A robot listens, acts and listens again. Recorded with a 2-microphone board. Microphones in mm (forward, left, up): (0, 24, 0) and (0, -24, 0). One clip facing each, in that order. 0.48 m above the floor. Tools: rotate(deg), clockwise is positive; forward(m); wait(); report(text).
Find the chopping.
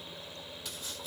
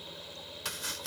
rotate(70)
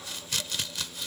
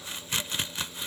rotate(30)
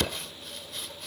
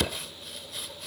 report("Found it: chopping, straight ahead.")